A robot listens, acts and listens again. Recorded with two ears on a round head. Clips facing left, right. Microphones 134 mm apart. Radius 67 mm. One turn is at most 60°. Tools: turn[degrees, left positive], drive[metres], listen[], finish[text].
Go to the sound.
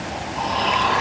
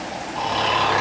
Thought: The snoring: about 45° right or 135° right.
Action: turn[-45]
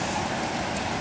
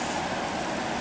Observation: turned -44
Action: listen[]
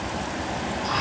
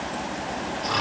Thought: So it is at 90° right.
Action: turn[-60]
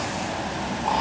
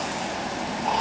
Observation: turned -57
Thought: Nothing new. It was at 30° right.
Action: turn[-30]
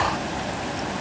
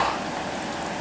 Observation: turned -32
Action: drive[1.0]
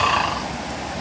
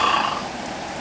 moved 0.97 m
Action: drive[1.0]
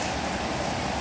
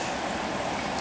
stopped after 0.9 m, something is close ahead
Action: listen[]
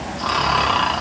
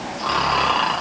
Action: finish[I am next to the snoring.]